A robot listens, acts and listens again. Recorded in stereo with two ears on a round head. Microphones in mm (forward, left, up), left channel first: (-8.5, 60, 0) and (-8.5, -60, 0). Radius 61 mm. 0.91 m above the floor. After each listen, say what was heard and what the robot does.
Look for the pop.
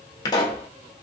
The pop: about 30° left or 150° left. Turn 30° left.
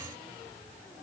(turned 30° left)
Keep listening.
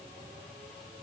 I heard a pop, but can't make it out now. It was about straight ahead or 120° left.